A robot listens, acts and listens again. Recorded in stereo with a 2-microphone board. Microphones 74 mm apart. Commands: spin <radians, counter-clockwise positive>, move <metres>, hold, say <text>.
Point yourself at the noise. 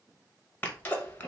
spin 0.35
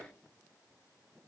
hold
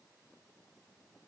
say I heard a sneeze, but can't make it out now. It was about straight ahead or 140° left.